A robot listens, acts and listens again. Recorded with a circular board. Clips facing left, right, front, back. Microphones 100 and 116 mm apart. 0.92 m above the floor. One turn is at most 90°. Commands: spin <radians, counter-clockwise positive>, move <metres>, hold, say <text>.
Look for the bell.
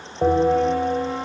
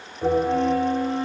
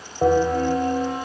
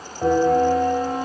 spin 0.87
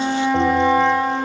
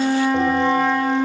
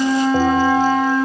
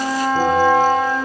hold
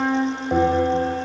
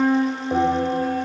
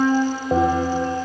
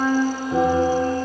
say Found it: a bell, straight ahead.